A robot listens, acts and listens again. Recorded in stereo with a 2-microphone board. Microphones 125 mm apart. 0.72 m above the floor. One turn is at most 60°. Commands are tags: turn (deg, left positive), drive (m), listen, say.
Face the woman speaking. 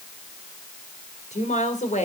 <turn deg="60"/>
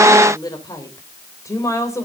<turn deg="20"/>
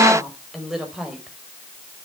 <say>Facing the woman speaking, 2 to 4 m away.</say>